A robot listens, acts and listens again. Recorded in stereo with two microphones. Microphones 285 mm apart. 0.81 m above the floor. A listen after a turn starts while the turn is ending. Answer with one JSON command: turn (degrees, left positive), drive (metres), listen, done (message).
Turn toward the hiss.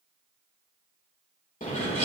{"listen": true}
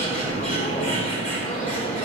{"listen": true}
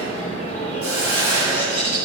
{"turn": -50}
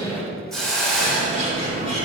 {"done": "Facing the hiss, 2 to 4 m away."}